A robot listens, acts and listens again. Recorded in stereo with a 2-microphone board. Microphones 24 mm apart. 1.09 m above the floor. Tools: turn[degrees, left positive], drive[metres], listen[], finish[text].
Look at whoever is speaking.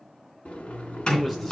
Action: turn[30]
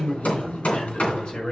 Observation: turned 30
Thought: So it is at 125° left.
Action: turn[125]
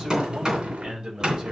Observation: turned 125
Thought: The man speaking is now 30° right.
Action: turn[-30]
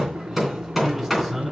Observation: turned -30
Thought: The man speaking is now 10° right.
Action: turn[-10]
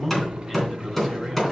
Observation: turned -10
Action: finish[Facing the man speaking.]